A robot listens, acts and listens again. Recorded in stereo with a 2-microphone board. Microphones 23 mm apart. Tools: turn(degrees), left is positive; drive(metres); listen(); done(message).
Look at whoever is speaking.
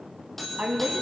turn(degrees=-65)
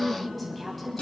done("Found it: a woman speaking, straight ahead, 2 to 4 m away.")